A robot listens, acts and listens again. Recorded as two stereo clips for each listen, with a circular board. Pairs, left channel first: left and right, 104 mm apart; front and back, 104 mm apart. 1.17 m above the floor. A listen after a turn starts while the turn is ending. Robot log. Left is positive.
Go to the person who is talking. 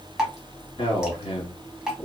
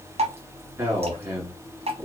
note: The man speaking: 120° left.
cmd yaw +120
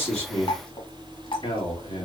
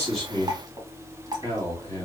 note: The man speaking is now 60° left.
cmd yaw +60
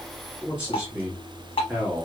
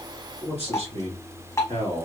note: The man speaking is now 10° right.
cmd yaw -10
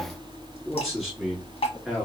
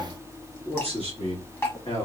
cmd fwd 1.0
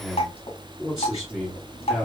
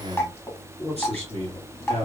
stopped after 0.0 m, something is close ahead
end: Blocked. The man speaking is further on, straight ahead.